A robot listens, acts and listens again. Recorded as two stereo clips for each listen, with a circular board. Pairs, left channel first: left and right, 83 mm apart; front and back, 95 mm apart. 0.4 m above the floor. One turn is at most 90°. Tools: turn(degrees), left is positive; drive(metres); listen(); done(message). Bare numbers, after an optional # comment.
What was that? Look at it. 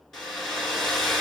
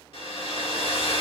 done("Facing the hair dryer, 1 to 2 m away.")